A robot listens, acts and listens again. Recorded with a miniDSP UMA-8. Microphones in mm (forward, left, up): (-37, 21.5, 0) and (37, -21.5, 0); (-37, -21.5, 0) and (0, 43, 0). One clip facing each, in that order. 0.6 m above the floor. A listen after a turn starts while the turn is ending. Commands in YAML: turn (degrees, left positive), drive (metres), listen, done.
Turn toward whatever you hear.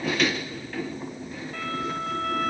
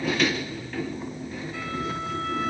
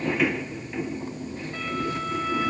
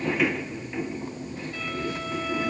listen: true
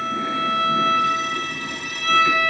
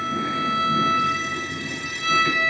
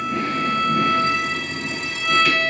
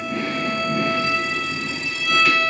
turn: -175
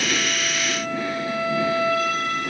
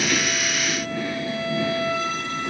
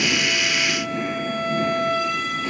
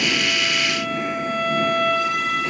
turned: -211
turn: 35
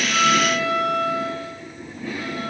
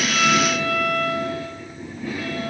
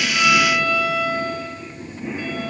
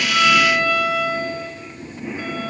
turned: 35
done: "Found it: a violin, straight ahead, 2 to 4 m away."